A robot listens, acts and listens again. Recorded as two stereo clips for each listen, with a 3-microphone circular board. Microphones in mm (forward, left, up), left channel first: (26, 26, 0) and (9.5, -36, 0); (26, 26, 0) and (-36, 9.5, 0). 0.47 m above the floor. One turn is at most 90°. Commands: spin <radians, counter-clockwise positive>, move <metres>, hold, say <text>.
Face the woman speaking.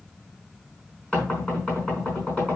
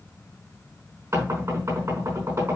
hold
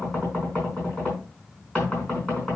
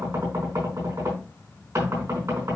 hold
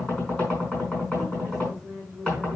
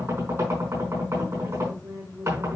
spin 1.57
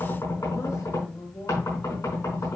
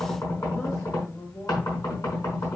spin 1.05
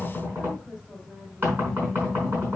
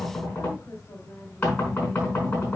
hold
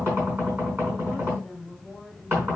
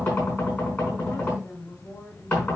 spin -0.44
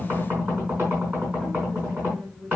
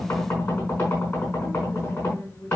spin -0.35
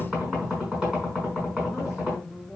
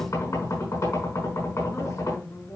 say Facing the woman speaking.